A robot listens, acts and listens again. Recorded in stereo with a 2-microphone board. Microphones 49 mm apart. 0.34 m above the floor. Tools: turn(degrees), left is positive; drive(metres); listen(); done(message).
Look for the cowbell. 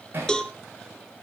turn(degrees=20)
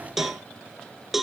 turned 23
done("Found it: a cowbell, straight ahead, 1 to 2 m away.")